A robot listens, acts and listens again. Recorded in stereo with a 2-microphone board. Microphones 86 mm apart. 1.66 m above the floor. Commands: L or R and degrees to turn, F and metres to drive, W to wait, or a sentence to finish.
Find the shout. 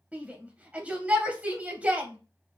R15
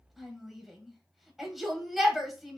Facing the shout.